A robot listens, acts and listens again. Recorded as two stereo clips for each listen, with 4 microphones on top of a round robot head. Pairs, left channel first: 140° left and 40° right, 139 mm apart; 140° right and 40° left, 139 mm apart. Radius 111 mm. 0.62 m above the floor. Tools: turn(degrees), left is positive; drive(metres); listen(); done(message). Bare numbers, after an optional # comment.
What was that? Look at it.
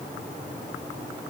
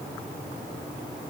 listen()
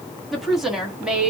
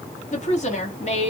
# The woman speaking: 125° right.
turn(-125)
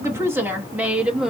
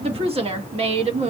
# The woman speaking is now 40° left.
turn(40)
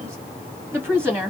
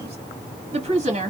# The woman speaking is now 30° left.
turn(30)
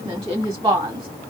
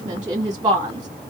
done("Facing the woman speaking, 1 to 2 m away.")